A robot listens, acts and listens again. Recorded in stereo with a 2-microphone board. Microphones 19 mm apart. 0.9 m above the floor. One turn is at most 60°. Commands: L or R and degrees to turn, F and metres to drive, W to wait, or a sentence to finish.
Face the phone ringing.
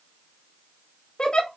W
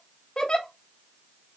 W
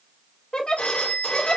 L60
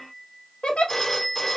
L25
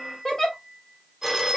Found it: a phone ringing, straight ahead, 1 to 2 m away.